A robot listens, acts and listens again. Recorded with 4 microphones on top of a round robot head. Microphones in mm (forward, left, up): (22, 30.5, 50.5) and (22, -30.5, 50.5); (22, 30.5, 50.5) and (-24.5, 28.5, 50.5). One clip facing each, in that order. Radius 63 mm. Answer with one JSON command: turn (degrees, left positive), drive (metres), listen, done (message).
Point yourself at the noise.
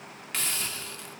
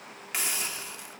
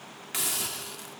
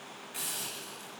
{"turn": -15}
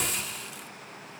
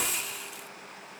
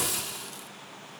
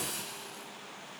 {"done": "Found it: a hiss, straight ahead."}